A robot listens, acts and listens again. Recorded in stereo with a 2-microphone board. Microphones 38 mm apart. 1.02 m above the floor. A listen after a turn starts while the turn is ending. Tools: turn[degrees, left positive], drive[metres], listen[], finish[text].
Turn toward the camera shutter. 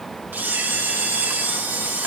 Thought: The camera shutter: about 55° right or 125° right.
Action: turn[-55]
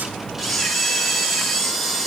Action: finish[Found it: a camera shutter, straight ahead.]